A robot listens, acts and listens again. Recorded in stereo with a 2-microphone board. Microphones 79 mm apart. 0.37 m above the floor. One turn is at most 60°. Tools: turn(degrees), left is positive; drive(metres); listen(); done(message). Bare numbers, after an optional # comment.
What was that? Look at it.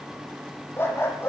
# The dog barking: about 30° left or 150° left.
turn(30)
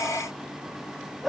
done("Found it: a dog barking, straight ahead.")